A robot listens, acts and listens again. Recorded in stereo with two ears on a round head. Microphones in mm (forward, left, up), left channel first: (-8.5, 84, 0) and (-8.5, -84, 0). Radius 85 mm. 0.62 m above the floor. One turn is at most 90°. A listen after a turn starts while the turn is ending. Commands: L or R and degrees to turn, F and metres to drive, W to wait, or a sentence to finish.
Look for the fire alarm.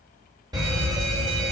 R20
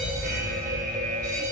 R90
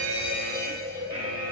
R25
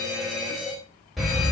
Found it: a fire alarm, straight ahead, over 4 m away.